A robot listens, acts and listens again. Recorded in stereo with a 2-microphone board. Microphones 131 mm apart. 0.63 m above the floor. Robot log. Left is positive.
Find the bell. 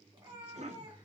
cmd idle
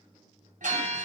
note: The bell: about 70° right or 110° right.
cmd yaw -70
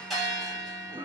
end: Facing the bell.